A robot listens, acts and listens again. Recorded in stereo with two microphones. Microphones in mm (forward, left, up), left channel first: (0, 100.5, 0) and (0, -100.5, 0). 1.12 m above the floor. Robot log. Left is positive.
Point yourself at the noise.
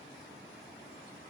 cmd idle
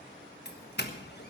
note: The doorbell: about 55° left or 125° left.
cmd yaw +55
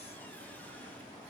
cmd idle
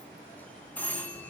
note: So it is at 10° left.
cmd yaw +10
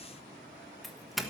end: Found it: a doorbell, straight ahead.